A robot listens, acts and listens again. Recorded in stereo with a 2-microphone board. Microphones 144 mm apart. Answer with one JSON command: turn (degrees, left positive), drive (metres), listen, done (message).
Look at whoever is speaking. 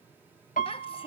{"turn": 40}
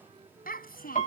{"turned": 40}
{"turn": 100}
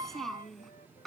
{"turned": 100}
{"done": "Facing the child speaking."}